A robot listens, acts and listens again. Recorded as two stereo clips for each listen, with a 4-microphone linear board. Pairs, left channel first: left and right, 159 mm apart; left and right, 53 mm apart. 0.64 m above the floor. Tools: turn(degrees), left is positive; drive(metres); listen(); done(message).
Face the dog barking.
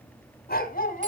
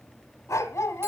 turn(degrees=65)
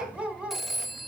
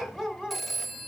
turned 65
turn(degrees=-10)
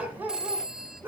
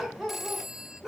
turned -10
turn(degrees=-15)
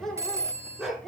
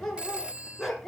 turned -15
done("Found it: a dog barking, straight ahead.")